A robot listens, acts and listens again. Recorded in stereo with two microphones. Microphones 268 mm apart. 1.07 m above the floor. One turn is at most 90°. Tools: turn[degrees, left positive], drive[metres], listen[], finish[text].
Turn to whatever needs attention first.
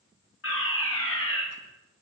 Thought: The fire alarm: about 50° left or 130° left.
Action: turn[50]
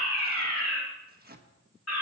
Thought: So it is at 75° left.
Action: turn[75]
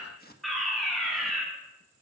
Action: finish[Facing the fire alarm, over 4 m away.]